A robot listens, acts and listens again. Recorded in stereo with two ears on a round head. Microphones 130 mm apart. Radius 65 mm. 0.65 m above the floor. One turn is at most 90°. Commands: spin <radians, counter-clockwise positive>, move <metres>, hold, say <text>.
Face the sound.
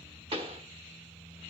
spin -0.70
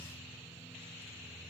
hold
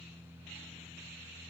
say I heard a pop, but can't make it out now. It was about straight ahead or 100° right.